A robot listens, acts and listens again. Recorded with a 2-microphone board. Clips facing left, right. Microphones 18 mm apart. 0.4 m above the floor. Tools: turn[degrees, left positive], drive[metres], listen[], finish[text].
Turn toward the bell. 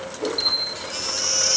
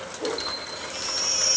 Thought: The bell: about 25° left or 155° left.
Action: turn[25]
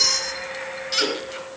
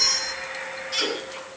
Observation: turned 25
Action: listen[]
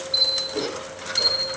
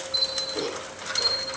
Thought: So it is at 130° left.
Action: turn[130]
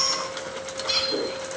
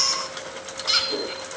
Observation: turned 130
Action: listen[]
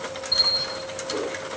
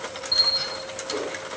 Thought: The bell is now 20° right.
Action: turn[-20]
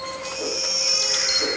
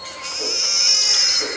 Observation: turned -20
Action: listen[]
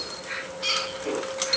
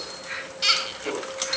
Action: finish[Facing the bell.]